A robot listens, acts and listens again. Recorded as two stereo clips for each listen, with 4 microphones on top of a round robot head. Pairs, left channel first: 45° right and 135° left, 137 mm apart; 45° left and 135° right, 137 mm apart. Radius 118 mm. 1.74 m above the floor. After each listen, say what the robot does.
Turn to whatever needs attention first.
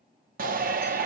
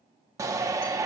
Turn 155° left.
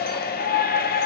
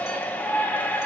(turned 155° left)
Turn 35° right.
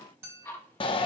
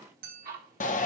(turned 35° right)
Turn 10° left.
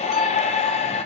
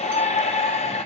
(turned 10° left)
Found it: a shout, straight ahead, under 1 m away.